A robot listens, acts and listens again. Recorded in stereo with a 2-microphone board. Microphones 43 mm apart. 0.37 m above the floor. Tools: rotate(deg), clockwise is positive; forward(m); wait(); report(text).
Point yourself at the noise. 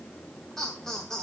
rotate(-30)
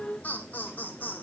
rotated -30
rotate(-140)
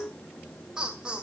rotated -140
rotate(20)
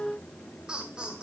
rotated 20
rotate(20)
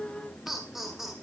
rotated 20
report("Facing the laughter.")